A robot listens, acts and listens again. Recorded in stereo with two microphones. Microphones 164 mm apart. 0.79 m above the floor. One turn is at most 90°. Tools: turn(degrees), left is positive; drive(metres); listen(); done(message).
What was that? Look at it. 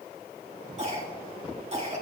turn(degrees=-40)
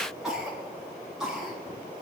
done("Facing the cough, over 4 m away.")